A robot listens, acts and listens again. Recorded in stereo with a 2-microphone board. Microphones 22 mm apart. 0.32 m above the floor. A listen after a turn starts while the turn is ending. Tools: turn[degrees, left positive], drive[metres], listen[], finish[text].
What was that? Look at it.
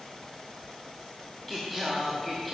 Action: turn[30]
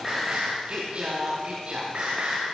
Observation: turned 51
Thought: So it is at 55° right.
Action: turn[-55]
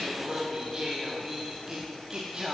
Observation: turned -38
Thought: The singing is now 20° right.
Action: turn[-20]
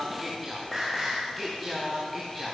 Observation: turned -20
Action: finish[Found it: singing, straight ahead, over 4 m away.]